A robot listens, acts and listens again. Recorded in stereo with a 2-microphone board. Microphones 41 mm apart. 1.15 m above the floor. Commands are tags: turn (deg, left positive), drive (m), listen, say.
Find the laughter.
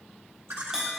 <turn deg="-90"/>
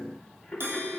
<say>Found it: laughter, straight ahead, 2 to 4 m away.</say>